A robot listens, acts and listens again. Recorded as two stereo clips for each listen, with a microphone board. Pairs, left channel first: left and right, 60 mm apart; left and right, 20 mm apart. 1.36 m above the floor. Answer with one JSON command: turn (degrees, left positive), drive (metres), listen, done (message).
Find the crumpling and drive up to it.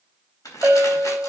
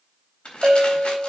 {"turn": 90}
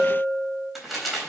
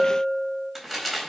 {"drive": 1.0}
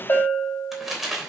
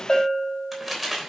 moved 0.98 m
{"drive": 1.0}
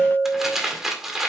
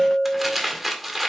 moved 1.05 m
{"drive": 1.0}
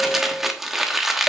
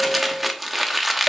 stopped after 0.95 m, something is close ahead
{"done": "I am next to the crumpling."}